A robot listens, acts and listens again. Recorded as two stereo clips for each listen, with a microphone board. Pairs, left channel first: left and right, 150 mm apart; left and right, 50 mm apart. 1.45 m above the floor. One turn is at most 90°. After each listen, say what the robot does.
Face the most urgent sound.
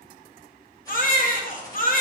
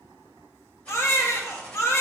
Turn 60° left.
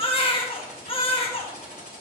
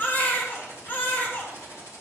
Turn 40° left.
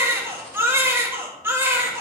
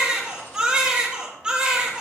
Turn 15° right.
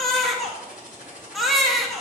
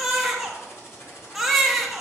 Found it: a baby crying, straight ahead, 1 to 2 m away.